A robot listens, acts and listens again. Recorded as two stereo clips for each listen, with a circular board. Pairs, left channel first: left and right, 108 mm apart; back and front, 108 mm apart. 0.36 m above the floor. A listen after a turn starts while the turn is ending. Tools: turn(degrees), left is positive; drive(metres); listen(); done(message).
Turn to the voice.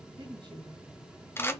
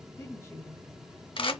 turn(degrees=-120)
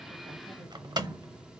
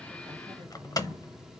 listen()
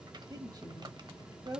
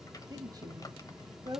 turn(degrees=-45)
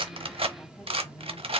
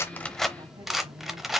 listen()
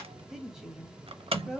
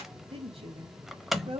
done("Facing the woman speaking.")